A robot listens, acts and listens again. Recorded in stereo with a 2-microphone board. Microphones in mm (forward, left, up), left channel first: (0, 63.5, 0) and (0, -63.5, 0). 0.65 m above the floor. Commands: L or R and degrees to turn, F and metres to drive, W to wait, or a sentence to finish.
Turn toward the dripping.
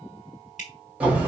L90
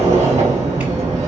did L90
W
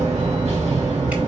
W
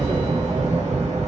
Facing where the dripping came from. I can't hear it now.